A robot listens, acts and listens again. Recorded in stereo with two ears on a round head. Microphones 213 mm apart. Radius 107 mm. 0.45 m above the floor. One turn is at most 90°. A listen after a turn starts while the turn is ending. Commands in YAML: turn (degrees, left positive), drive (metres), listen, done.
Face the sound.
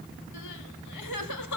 turn: 90
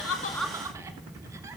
listen: true
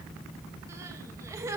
turn: -15
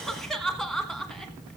done: "Facing the crying."